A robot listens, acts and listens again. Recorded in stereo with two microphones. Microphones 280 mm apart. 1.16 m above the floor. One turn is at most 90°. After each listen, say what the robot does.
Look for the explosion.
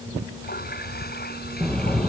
Turn 30° left.
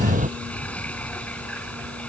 Turn 25° right.
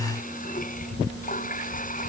I heard an explosion from this way, but can't make it out now.